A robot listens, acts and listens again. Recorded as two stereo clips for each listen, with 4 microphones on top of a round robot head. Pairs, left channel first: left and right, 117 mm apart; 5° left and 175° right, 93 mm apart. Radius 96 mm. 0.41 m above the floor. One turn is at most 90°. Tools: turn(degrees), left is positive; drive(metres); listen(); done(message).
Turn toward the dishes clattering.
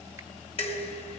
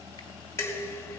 turn(degrees=60)
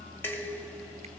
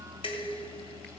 turn(degrees=20)
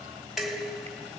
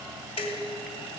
done("Found it: dishes clattering, straight ahead, 2 to 4 m away.")